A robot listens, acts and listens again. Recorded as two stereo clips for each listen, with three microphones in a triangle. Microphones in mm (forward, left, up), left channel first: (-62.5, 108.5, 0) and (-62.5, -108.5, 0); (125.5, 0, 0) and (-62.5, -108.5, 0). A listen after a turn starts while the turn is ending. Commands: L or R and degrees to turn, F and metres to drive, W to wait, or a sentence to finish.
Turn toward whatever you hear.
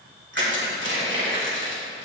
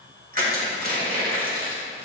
R105
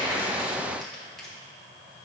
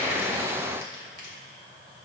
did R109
W
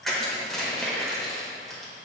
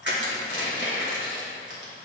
Facing the crushing.